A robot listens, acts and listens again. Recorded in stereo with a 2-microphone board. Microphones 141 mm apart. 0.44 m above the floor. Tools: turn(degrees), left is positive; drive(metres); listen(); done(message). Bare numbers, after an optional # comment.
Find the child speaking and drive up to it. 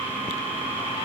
listen()
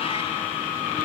listen()
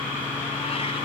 done("I can't make out a child speaking.")